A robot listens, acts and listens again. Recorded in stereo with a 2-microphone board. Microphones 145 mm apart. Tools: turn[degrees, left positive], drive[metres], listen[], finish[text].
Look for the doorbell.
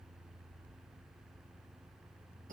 Action: listen[]
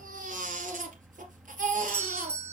Action: turn[30]
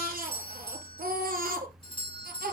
Thought: So it is at 140° left.
Action: turn[140]
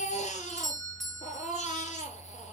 Action: finish[Found it: a doorbell, straight ahead.]